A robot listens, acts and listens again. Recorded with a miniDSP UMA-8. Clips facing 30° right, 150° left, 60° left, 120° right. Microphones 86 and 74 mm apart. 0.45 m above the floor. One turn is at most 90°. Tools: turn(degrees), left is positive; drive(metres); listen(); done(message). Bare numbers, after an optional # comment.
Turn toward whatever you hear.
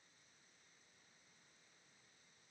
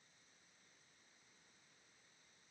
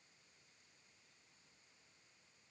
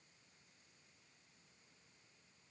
listen()
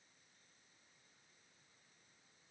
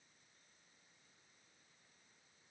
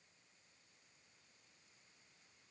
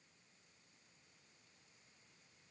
listen()
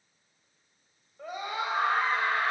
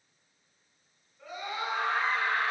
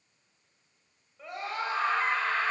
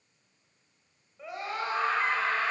# The scream: 35° right.
turn(-35)
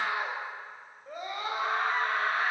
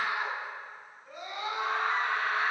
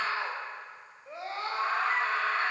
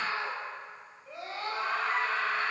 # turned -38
done("Found it: a scream, straight ahead.")